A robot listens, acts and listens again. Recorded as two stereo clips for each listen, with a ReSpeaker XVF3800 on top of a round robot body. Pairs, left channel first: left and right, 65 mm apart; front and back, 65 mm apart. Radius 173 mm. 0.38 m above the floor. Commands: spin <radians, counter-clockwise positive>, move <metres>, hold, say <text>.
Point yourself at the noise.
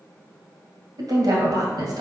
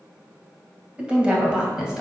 spin -1.75
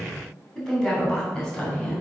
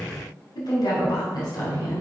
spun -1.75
spin 0.17
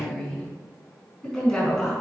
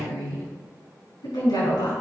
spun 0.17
say Facing the woman speaking, over 4 m away.